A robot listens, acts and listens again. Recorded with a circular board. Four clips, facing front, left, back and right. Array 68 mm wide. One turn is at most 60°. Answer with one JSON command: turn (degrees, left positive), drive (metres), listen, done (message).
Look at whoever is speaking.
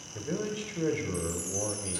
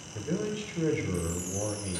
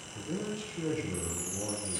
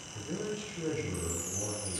{"turn": 40}
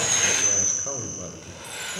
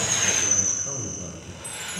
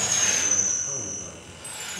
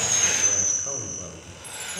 {"turn": -20}
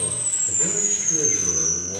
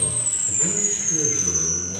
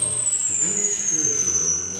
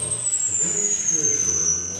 {"listen": true}
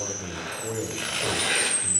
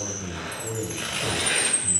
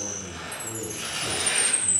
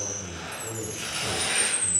{"done": "Facing the man speaking."}